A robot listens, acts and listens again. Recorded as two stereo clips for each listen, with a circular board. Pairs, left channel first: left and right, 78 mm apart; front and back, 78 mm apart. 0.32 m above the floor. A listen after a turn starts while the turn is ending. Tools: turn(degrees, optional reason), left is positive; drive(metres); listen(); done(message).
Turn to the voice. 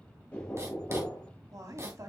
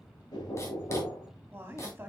turn(degrees=-125, reason="The woman speaking: 125° right.")
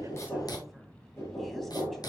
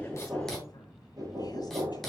listen()
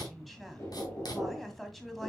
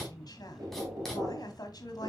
done("Facing the woman speaking.")